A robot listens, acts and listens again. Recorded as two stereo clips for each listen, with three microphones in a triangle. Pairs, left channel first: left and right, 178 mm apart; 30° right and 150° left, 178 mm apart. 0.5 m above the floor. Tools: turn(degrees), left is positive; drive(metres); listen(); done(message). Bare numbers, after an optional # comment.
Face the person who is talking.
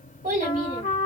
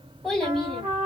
# The child speaking: 115° right.
turn(-115)
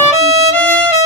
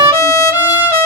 listen()
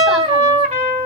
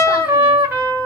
listen()
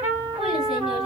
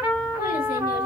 done("Facing where the child speaking came from. I can't hear it now.")